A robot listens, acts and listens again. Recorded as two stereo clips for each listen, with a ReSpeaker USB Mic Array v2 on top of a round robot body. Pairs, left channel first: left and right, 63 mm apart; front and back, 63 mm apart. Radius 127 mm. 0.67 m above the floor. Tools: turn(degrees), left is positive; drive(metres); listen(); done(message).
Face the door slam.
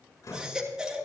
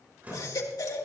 turn(degrees=115)
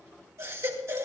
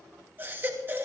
done("I heard a door slam from this way, but can't make it out now.")